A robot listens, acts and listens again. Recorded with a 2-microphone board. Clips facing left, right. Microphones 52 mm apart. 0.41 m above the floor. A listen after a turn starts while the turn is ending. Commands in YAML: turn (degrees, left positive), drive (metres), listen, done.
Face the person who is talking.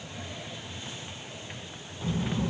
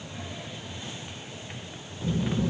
turn: 35
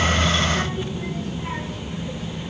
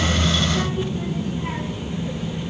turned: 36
done: "Facing the child speaking."